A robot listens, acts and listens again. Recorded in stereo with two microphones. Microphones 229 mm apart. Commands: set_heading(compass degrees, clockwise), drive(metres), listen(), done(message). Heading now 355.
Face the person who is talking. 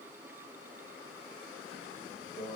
listen()
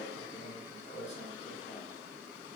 listen()
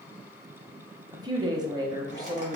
set_heading(10)
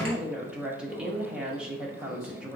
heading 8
done("Facing the woman speaking, under 1 m away.")